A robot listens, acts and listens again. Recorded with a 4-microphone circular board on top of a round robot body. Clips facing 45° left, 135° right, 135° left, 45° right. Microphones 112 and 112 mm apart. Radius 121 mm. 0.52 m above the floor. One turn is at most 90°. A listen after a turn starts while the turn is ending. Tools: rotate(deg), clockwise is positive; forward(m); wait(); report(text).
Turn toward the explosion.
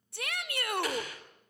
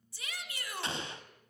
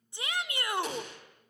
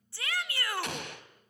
rotate(70)
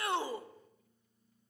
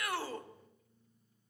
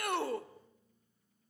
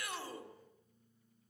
report("I heard an explosion from this way, but can't make it out now.")